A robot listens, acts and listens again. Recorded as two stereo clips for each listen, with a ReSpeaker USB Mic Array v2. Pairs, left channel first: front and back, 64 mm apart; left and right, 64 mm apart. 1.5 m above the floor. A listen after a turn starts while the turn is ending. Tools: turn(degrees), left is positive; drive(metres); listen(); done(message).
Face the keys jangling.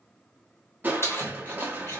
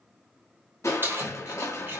turn(degrees=-40)
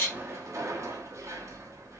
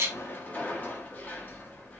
listen()
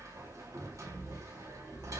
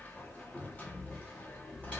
listen()
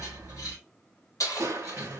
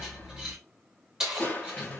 turn(degrees=-10)
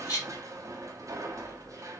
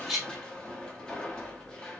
listen()
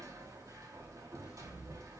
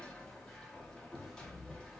listen()
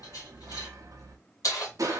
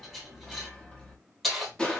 done("Facing the keys jangling.")